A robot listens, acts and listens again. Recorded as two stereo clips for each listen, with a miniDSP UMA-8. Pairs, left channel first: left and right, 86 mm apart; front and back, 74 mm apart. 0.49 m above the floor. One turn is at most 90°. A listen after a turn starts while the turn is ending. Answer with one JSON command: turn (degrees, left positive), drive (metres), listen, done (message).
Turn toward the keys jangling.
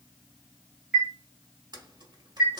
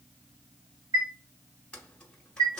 {"turn": -75}
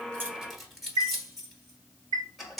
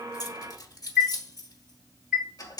{"done": "Facing the keys jangling, under 1 m away."}